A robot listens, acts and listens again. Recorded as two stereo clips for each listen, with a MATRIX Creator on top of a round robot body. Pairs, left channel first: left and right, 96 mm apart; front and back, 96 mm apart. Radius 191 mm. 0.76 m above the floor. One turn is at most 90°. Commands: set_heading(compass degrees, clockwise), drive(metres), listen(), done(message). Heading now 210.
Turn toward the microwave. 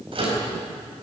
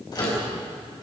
set_heading(265)
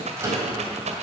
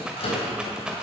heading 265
set_heading(295)
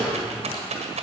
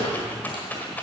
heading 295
done("Found it: a microwave, straight ahead, over 4 m away.")